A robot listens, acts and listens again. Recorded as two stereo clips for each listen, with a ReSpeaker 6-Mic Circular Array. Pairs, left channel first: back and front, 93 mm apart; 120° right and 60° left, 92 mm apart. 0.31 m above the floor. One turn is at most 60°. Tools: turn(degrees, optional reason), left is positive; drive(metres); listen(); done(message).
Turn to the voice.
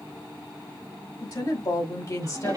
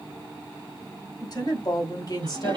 turn(degrees=-60, reason="The woman speaking: 145° right.")
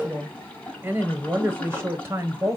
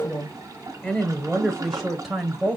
turn(degrees=-15, reason="The woman speaking is now 15° right.")
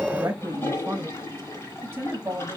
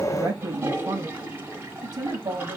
turn(degrees=40, reason="The woman speaking is now 40° left.")
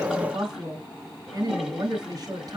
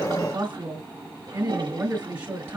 done("Found it: a woman speaking, straight ahead, 1 to 2 m away.")